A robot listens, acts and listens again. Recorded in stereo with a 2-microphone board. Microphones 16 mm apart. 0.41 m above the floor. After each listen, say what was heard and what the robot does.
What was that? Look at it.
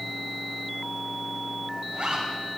The zipper: about 60° right or 120° right. Turn 60° right.
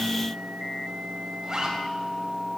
So it is at 40° right. Turn 40° right.
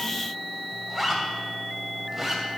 Facing the zipper, 2 to 4 m away.